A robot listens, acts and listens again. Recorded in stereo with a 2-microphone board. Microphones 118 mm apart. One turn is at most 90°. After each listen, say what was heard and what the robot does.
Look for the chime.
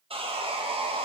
Keep listening.
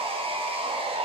Keep listening.
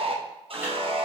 The chime: about 20° right or 160° right. Turn 20° right.
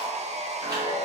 So it is at 140° right. Turn 90° right.
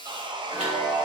The chime is now 70° right. Turn 70° right.
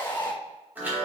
The chime is now 15° right. Turn 15° right.
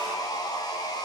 Keep listening.
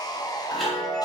Found it: a chime, straight ahead, 2 to 4 m away.